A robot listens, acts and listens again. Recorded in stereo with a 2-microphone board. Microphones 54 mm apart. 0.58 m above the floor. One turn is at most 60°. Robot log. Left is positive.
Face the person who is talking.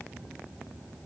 cmd idle
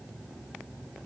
cmd idle
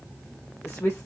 note: The woman speaking: about 55° left or 125° left.
cmd yaw +55
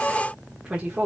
note: So it is at 15° right.
cmd yaw -15
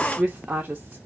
note: The woman speaking is now 25° right.
cmd yaw -25
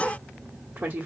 note: The woman speaking is now 30° right.
cmd yaw -30
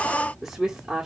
end: Facing the woman speaking, 1 to 2 m away.